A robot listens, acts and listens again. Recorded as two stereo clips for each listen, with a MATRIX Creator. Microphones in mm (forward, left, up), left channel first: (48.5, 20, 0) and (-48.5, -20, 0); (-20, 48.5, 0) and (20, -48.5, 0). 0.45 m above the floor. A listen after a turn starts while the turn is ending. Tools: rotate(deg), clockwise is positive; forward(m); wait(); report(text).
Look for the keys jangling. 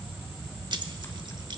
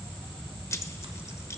rotate(-170)
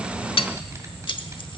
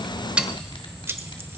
report("Facing the keys jangling, under 1 m away.")